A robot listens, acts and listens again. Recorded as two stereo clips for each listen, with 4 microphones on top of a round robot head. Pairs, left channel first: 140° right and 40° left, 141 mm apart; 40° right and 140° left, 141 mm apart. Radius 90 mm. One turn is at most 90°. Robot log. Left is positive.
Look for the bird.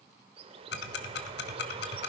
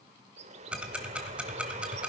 note: The bird: 95° left.
cmd yaw +90
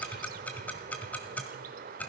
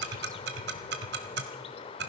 note: The bird is now 15° left.
cmd yaw +15
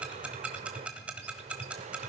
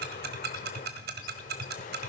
cmd idle
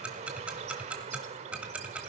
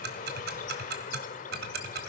end: Found it: a bird, straight ahead, under 1 m away.